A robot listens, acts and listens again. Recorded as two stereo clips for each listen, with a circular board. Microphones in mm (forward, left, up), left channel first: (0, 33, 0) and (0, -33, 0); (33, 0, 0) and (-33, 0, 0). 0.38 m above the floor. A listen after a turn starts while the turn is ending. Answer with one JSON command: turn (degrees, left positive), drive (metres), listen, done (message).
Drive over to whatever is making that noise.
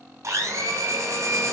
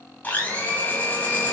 {"turn": -60}
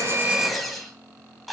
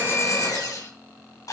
{"drive": 1.0}
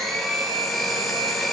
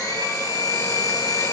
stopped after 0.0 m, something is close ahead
{"done": "Blocked. The blender is further on, straight ahead."}